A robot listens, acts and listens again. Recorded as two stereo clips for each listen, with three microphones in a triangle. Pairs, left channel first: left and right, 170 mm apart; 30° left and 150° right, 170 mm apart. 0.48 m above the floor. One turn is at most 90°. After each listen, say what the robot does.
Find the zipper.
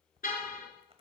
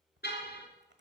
Turn 90° right.
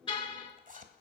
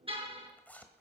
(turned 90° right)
Turn 50° right.
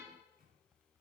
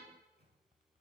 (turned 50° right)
Keep listening.
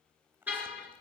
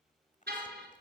Turn 15° right.
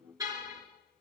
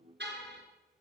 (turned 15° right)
Keep listening.
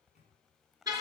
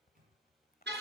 Facing the zipper.